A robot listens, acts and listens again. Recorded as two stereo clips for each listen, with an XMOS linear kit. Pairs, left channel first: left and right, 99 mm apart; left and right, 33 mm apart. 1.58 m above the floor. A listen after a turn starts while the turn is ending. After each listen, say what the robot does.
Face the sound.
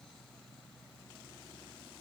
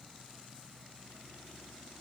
Keep listening.
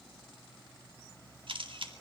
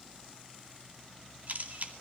Turn 55° right.
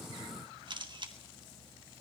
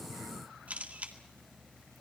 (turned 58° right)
Turn 55° right.
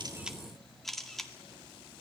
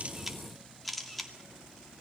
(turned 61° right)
Found it: a camera shutter, straight ahead.